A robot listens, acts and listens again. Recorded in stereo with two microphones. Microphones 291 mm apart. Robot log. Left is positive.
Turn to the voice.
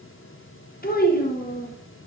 note: The child speaking: about 35° left or 145° left.
cmd yaw +35
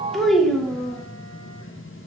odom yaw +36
end: Facing the child speaking.